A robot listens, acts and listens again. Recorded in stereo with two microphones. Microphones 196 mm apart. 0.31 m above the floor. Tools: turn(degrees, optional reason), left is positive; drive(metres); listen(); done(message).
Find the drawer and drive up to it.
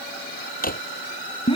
turn(degrees=45, reason="The drawer: about 45° left or 135° left.")
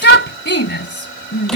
listen()
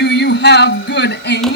listen()
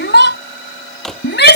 drive(metres=1.0)
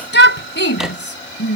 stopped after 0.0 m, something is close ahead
listen()
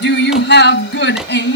done("Blocked. The drawer is further on, straight ahead.")